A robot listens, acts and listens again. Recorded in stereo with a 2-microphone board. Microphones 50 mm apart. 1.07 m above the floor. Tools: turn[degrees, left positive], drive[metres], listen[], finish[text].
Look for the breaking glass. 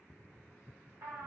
Action: listen[]
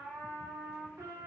Action: listen[]
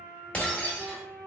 Thought: The breaking glass: about 25° left or 155° left.
Action: turn[25]
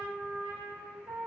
Action: listen[]
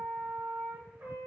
Action: finish[I heard breaking glass, but can't make it out now. It was about straight ahead or 130° left.]